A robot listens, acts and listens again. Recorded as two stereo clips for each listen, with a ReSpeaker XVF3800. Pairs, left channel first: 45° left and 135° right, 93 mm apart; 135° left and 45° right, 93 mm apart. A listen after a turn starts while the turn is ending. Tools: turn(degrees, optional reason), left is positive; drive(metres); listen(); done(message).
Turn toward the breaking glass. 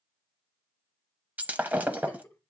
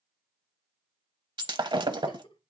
turn(degrees=-65, reason="The breaking glass: 65° right.")
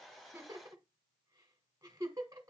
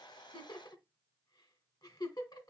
done("I heard breaking glass from this way, but can't make it out now.")